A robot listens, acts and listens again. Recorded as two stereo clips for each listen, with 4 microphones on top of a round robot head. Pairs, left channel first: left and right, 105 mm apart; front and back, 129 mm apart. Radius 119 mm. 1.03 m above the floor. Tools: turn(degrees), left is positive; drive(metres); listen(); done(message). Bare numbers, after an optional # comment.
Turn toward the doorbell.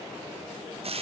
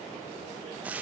listen()
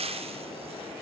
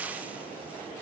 listen()
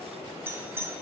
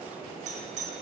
# The doorbell: 155° right.
turn(-155)
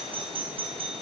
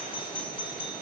# The doorbell is now 55° right.
turn(-55)
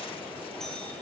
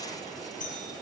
done("Found it: a doorbell, straight ahead.")